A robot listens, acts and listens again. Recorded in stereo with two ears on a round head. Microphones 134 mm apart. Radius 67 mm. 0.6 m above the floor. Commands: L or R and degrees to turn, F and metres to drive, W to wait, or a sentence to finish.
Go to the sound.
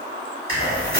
R35
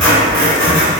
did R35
F1.0
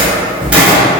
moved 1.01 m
R10
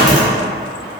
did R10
F1.0
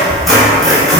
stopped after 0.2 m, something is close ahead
I am next to the squeak.